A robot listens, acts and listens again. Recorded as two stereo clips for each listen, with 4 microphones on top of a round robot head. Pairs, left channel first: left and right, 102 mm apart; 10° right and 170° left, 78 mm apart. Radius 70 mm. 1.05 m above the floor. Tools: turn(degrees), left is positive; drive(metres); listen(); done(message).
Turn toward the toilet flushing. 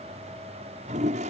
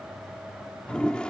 turn(degrees=-90)
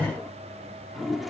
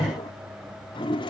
done("Facing the toilet flushing.")